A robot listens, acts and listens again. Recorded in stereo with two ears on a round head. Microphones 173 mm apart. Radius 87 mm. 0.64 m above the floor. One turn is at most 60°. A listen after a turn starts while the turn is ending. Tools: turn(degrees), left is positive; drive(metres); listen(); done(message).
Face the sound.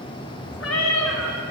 turn(degrees=60)
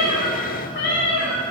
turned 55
turn(degrees=60)
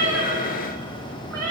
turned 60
turn(degrees=10)
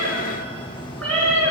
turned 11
done("Found it: a cat meowing, straight ahead, over 4 m away.")